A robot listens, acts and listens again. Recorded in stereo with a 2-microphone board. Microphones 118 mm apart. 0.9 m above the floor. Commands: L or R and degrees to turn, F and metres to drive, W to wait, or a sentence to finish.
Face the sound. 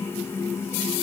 W
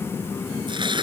R45
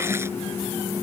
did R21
W
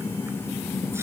W
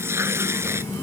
R20
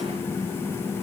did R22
W
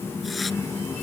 W
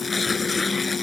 Facing the tearing paper.